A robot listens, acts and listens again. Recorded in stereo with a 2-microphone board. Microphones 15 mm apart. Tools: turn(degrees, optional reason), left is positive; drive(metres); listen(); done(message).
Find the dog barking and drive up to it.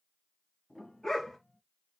turn(degrees=60, reason="The dog barking: about 60° left or 120° left.")
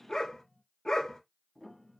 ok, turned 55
turn(degrees=65, reason="So it is at 65° left.")
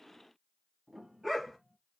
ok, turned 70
drive(metres=1.0)
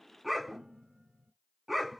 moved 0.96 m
drive(metres=1.0)
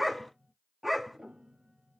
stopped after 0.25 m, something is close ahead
done("I am next to the dog barking.")